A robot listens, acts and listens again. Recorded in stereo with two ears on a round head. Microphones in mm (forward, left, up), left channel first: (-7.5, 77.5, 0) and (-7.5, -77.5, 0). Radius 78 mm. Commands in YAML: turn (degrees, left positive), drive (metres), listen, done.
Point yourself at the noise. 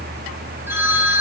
turn: -30
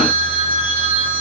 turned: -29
turn: -135
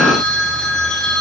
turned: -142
done: "Found it: a phone ringing, straight ahead."